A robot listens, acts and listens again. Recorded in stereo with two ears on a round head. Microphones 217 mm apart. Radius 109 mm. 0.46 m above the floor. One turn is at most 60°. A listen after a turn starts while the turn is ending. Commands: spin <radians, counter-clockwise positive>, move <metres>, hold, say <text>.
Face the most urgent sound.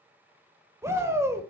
spin -0.52
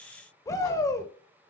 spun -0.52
spin 0.26
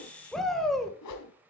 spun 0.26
say Found it: a shout, straight ahead, 1 to 2 m away.